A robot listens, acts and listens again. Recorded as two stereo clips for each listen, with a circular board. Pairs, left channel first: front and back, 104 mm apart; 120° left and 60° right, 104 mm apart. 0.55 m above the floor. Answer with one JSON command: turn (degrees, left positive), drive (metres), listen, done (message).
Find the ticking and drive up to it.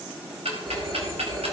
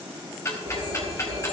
{"turn": 180}
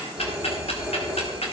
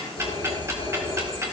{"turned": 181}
{"listen": true}
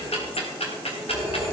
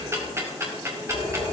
{"drive": 1.0}
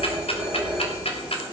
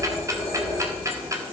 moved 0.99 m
{"drive": 1.0}
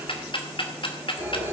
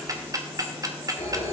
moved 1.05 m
{"turn": -10}
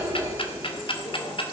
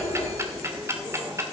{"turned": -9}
{"drive": 1.0}
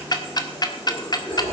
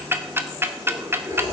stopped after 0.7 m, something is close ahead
{"done": "I am next to the ticking."}